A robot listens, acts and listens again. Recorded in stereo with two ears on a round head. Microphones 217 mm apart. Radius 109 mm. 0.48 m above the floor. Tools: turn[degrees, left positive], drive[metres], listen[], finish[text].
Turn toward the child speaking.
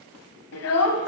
Thought: The child speaking: about 70° left or 110° left.
Action: turn[70]
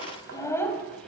Action: finish[Facing the child speaking.]